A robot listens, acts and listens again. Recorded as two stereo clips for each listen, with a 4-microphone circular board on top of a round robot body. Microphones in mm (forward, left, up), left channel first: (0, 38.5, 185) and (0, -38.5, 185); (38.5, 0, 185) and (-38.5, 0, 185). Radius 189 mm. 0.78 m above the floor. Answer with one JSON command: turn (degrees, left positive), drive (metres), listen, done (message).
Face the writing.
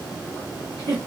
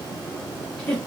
{"listen": true}
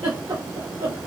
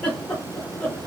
{"listen": true}
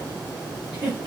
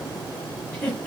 {"done": "I can't make out writing to turn to."}